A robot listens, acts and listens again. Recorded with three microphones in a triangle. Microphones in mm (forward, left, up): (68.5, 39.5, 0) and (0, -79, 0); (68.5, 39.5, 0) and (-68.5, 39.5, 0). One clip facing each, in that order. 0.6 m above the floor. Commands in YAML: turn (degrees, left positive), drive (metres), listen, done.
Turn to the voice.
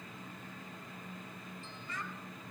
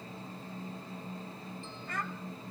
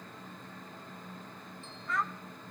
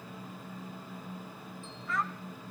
turn: -90
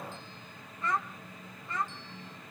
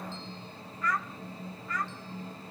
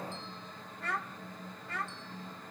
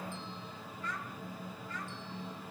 done: "Found it: a child speaking, straight ahead."